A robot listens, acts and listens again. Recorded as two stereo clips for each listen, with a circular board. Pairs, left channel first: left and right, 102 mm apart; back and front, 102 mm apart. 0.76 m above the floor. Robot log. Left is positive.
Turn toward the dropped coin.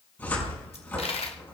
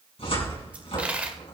note: The dropped coin: 75° left.
cmd yaw +75
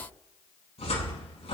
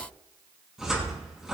end: I heard a dropped coin from this way, but can't make it out now.